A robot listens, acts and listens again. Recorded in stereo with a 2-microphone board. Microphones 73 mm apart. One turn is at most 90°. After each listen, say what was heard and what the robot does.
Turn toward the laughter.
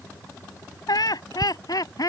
The laughter: about 60° left or 120° left. Turn 60° left.
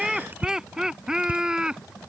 So it is at 15° right. Turn 15° right.
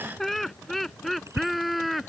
Facing the laughter.